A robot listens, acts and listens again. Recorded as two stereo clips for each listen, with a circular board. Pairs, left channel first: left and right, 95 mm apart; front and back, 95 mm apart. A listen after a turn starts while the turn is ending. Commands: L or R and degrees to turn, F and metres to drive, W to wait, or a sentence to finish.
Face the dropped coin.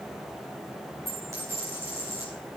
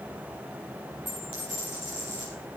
R30
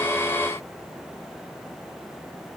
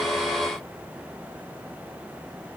I heard a dropped coin from this way, but can't make it out now.